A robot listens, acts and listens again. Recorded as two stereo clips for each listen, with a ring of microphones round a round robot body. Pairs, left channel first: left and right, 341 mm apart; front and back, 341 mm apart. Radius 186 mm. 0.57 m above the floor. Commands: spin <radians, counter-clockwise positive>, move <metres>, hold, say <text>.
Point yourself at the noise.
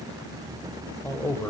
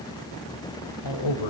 spin 0.17
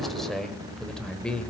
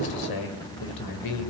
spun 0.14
say Found it: a man speaking, straight ahead, 2 to 4 m away.